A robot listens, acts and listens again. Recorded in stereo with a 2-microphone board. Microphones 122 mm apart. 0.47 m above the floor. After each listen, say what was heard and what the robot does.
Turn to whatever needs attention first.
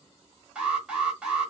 Turn 30° right.
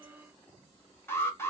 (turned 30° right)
So it is at 20° left. Turn 20° left.
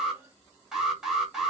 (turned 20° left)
Found it: an alarm, straight ahead.